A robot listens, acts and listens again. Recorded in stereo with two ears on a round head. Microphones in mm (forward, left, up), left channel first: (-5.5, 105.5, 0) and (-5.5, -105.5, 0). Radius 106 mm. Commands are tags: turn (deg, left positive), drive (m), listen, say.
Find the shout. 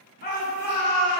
<turn deg="45"/>
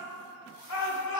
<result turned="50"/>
<turn deg="85"/>
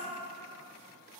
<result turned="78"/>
<listen/>
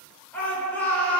<say>Found it: a shout, straight ahead.</say>